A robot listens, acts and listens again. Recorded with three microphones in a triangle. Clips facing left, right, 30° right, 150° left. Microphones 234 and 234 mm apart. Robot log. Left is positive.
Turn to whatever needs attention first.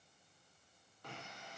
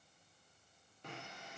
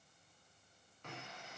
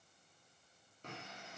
cmd idle
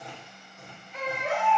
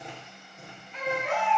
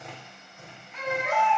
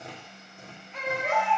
note: The baby crying: 135° left.
cmd yaw +135
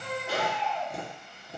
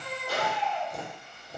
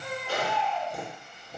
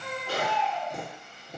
note: The baby crying is now 40° left.
cmd yaw +40
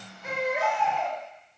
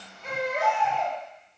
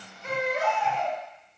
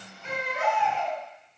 note: The baby crying is now 10° left.
cmd yaw +10
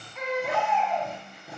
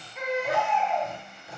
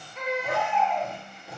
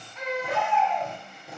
end: Found it: a baby crying, straight ahead, 1 to 2 m away.